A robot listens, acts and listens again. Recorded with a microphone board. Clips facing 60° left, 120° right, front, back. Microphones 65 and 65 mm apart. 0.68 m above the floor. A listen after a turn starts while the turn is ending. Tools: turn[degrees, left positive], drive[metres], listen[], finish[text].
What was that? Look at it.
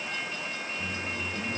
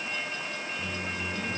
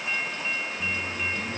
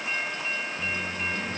Thought: The microwave: straight behind.
Action: turn[180]
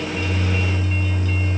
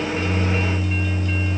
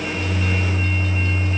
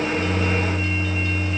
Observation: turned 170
Action: finish[Facing the microwave, over 4 m away.]